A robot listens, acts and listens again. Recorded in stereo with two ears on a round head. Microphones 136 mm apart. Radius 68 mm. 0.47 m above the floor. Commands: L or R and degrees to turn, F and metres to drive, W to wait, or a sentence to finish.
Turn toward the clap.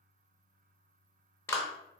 L15
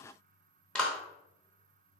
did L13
Facing the clap.